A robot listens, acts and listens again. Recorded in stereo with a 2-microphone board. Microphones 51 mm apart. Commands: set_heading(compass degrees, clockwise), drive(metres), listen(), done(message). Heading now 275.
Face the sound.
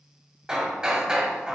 set_heading(290)
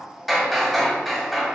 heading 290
done("Found it: hammering, straight ahead.")